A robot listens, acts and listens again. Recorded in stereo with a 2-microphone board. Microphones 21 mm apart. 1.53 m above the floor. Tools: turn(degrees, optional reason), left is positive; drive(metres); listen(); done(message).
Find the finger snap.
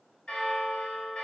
listen()
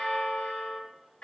listen()
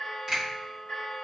turn(degrees=-30, reason="The finger snap: about 30° right or 150° right.")
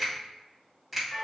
done("Facing the finger snap.")